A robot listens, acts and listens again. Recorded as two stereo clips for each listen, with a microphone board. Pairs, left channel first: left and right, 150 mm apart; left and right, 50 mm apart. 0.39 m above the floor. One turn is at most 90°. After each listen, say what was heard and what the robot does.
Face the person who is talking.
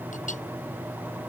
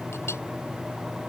Keep listening.
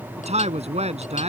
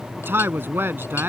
The man speaking: about 50° right or 130° right. Turn 50° right.
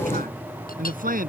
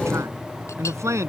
So it is at 80° right. Turn 80° right.
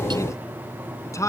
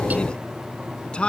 The man speaking is now 20° left. Turn 20° left.
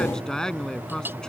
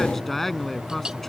Found it: a man speaking, straight ahead.